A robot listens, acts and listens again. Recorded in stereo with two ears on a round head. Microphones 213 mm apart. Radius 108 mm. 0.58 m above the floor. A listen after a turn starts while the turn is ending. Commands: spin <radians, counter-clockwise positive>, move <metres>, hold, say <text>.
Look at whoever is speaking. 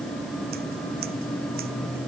hold
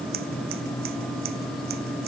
hold
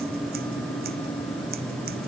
say I can't make out anyone speaking.